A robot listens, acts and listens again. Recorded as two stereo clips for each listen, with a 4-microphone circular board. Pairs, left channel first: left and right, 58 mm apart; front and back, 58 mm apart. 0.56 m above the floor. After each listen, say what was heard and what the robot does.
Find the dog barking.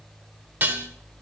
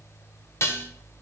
Keep listening.
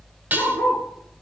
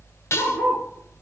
The dog barking: 55° left. Turn 55° left.
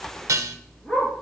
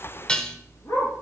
The dog barking is now 25° left. Turn 25° left.
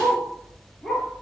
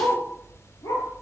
The dog barking is now 10° left. Turn 10° left.
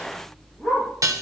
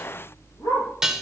Facing the dog barking, over 4 m away.